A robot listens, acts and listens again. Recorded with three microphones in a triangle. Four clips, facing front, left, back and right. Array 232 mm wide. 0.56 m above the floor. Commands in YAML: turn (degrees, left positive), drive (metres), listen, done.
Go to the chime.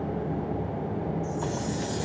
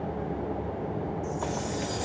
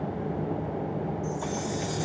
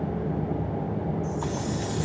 turn: 135
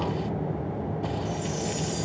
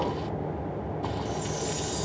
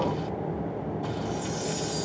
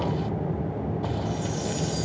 turn: -30
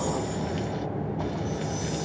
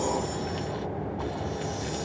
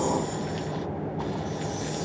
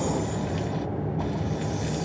drive: 1.0
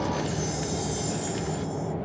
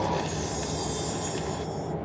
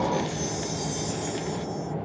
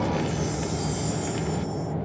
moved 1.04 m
turn: 10
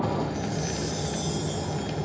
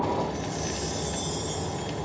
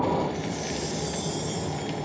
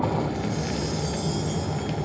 drive: 1.0
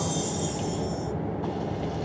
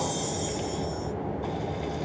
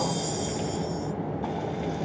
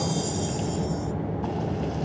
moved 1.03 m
drive: 1.0
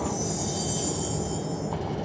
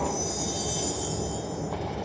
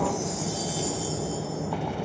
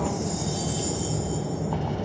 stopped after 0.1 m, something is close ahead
turn: 10
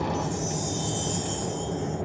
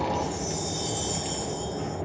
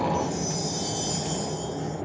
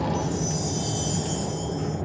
done: "Arrived at the chime, straight ahead."